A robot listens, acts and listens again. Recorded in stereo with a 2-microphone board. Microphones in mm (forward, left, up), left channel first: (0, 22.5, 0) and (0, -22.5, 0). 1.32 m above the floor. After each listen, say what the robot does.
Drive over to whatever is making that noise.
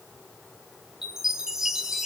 Turn 30° right.
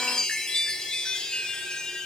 Turn 15° left.
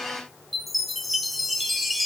Drive 1.0 m forward.
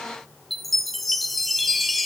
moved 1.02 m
Drive 1.0 m forward.
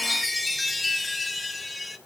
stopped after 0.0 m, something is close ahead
Arrived at the chime, straight ahead.